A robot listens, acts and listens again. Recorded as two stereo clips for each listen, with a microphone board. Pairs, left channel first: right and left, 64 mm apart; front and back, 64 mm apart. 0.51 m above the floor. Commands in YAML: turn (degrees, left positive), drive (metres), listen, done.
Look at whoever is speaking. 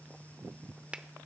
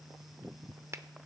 listen: true
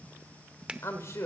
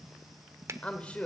turn: -65
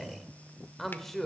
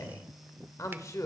done: "Facing the woman speaking, 1 to 2 m away."